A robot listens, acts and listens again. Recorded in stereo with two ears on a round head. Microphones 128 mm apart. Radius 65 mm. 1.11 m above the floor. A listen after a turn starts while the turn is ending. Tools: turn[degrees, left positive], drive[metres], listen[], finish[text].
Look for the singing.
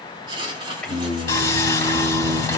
Action: turn[30]
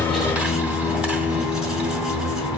Thought: So it is at 150° left.
Action: turn[150]
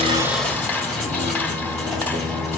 Action: listen[]
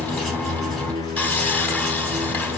Thought: The singing is now 30° right.
Action: turn[-30]
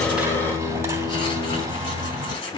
Action: finish[Facing the singing, over 4 m away.]